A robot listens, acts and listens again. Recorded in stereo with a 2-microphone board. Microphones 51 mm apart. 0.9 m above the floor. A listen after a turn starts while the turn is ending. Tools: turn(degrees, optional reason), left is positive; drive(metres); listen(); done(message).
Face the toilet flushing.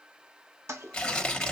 turn(degrees=-60, reason="The toilet flushing: about 60° right or 120° right.")
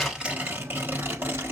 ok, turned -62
listen()
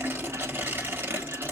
turn(degrees=-60, reason="So it is at 60° right.")
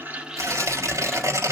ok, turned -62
listen()
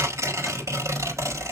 listen()
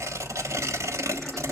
done("Facing where the toilet flushing came from. I can't hear it now.")